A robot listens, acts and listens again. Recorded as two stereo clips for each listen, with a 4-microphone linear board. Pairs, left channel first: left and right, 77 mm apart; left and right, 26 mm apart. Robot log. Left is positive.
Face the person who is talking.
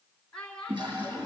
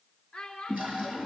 note: The child speaking: about 15° left or 165° left.
cmd yaw +15
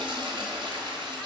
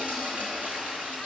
cmd idle
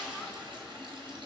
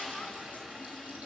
cmd idle
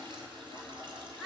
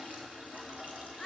end: Found it: a child speaking, straight ahead.